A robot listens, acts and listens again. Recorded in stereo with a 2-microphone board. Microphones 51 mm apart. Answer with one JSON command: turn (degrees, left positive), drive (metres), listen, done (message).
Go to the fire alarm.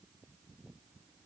{"listen": true}
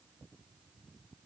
{"listen": true}
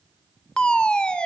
{"turn": 20}
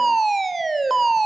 {"drive": 1.0}
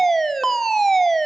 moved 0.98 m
{"turn": 10}
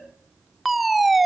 {"drive": 1.0}
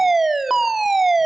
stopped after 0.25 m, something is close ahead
{"done": "Arrived at the fire alarm, straight ahead."}